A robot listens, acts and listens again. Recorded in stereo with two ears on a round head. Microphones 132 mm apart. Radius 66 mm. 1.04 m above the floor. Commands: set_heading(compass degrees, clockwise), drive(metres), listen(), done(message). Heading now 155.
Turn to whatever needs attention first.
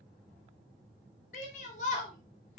set_heading(105)
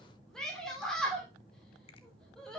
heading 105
done("Found it: a shout, straight ahead, 2 to 4 m away.")